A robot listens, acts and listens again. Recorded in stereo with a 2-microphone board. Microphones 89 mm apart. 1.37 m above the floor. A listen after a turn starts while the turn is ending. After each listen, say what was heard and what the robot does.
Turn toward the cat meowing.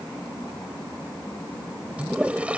Keep listening.
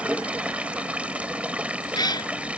The cat meowing: about 50° left or 130° left. Turn 50° left.
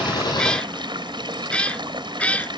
So it is at 15° left. Turn 15° left.
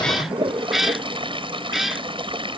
Found it: a cat meowing, straight ahead.